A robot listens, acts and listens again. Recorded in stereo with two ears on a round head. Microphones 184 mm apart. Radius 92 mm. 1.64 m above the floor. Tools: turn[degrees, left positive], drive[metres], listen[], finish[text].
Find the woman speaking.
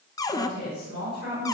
Thought: The woman speaking: about 50° left or 130° left.
Action: turn[50]
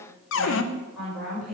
Action: finish[Facing the woman speaking.]